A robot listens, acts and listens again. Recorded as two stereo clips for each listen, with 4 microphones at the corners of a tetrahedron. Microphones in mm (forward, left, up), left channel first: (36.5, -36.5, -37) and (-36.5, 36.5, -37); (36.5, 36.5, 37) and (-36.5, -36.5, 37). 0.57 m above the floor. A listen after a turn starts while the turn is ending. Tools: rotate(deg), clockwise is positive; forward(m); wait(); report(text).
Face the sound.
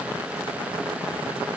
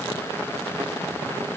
wait()
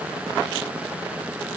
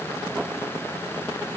wait()
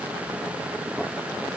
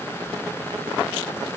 report("I can't make out anything.")